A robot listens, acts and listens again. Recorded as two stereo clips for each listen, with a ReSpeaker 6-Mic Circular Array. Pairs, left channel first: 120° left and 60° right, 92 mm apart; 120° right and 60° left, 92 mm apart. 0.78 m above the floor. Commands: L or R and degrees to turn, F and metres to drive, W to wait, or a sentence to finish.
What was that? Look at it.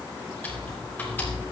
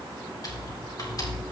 R170
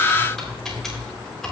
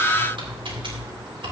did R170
L35
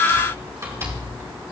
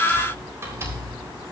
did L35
Facing the typing on a keyboard, 2 to 4 m away.